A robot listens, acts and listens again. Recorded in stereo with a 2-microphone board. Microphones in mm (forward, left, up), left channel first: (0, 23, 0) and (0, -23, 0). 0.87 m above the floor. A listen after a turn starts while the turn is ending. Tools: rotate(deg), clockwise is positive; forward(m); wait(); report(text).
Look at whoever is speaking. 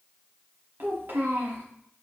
rotate(60)
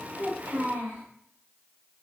rotate(60)
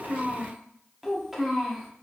rotate(10)
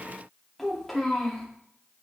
report("Found it: a child speaking, straight ahead, 1 to 2 m away.")